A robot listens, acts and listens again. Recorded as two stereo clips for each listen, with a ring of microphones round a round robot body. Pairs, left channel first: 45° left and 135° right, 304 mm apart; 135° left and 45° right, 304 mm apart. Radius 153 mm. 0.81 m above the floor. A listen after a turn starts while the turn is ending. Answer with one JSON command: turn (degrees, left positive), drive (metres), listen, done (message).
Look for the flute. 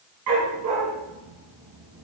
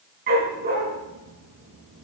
{"listen": true}
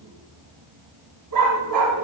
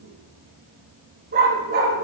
{"listen": true}
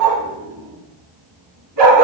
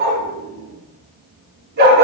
{"done": "I can't make out a flute to turn to."}